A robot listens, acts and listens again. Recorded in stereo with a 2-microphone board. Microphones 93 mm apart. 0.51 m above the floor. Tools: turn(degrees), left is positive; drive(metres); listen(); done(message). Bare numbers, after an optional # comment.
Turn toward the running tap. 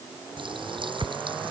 # The running tap: about 60° right or 120° right.
turn(-60)
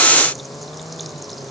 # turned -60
done("Facing the running tap.")